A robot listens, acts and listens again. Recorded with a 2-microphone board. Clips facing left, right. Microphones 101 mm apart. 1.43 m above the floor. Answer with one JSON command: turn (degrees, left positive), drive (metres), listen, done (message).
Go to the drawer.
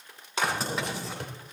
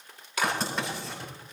{"turn": 65}
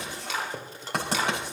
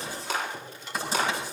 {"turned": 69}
{"turn": 40}
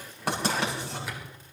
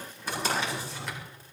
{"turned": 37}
{"drive": 1.0}
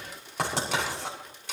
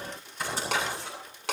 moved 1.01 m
{"listen": true}
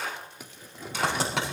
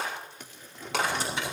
{"turn": 10}
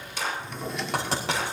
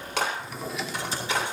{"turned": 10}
{"drive": 1.0}
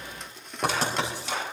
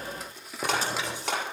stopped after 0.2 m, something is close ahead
{"done": "I am next to the drawer."}